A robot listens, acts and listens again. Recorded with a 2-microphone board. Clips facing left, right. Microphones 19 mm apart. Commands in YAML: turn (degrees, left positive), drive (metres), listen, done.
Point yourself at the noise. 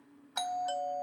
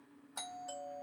turn: 60
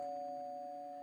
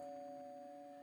turn: 50
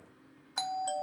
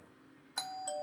turn: 20
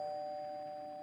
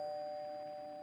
done: "Facing the doorbell, under 1 m away."